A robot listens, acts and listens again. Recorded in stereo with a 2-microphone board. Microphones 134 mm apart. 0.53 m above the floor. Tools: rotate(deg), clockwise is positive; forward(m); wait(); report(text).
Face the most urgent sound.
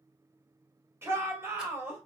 rotate(20)
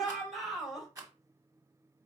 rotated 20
report("Facing the shout.")